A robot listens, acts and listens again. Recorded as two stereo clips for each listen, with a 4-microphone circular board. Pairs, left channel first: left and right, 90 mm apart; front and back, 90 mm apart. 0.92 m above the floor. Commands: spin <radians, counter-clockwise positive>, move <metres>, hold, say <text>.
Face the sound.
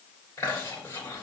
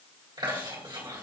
spin 2.62
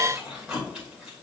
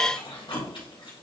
spin -0.17
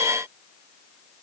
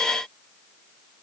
hold
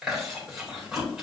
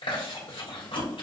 spin -0.17
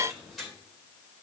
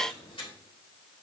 say Facing the chewing, 2 to 4 m away.